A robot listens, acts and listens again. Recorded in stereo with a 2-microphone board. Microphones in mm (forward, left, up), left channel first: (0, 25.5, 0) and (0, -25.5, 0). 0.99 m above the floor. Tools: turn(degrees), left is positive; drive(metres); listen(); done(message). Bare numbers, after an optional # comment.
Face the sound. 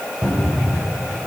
# The cupboard door: about 25° right or 155° right.
turn(-25)
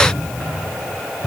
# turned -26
done("Facing the cupboard door.")